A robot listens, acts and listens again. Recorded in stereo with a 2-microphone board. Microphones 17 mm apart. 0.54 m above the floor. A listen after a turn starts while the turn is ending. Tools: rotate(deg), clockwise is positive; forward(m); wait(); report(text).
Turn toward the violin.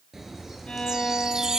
rotate(-90)
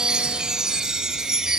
wait()
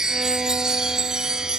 wait()
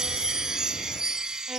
report("Facing where the violin came from. I can't hear it now.")